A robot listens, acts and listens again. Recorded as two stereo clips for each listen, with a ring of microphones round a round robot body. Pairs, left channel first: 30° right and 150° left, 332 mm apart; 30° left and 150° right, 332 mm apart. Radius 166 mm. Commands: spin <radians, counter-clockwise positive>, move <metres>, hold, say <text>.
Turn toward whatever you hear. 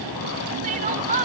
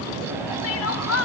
spin 1.40
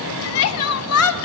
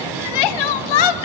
spin 0.35
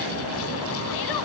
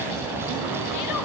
hold
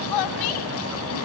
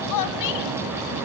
say Facing the crying, under 1 m away.